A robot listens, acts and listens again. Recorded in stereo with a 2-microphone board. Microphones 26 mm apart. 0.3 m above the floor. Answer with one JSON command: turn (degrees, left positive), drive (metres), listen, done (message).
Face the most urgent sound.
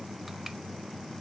{"listen": true}
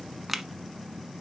{"listen": true}
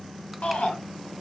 {"turn": 65}
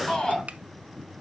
{"turn": 35}
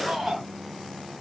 {"done": "Facing the shout, 2 to 4 m away."}